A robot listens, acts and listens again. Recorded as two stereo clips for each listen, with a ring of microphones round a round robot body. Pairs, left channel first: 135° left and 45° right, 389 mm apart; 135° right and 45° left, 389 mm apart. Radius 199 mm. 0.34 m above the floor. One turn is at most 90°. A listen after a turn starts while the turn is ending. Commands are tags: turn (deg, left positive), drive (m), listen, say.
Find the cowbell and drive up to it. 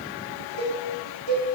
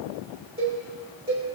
<turn deg="-30"/>
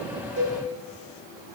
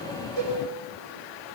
<drive m="1.0"/>
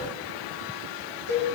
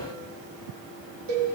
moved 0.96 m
<drive m="1.0"/>
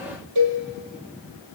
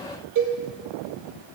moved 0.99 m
<drive m="1.0"/>
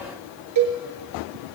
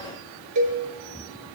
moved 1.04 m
<drive m="1.0"/>
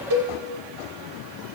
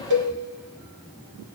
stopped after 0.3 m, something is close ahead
<say>I am next to the cowbell.</say>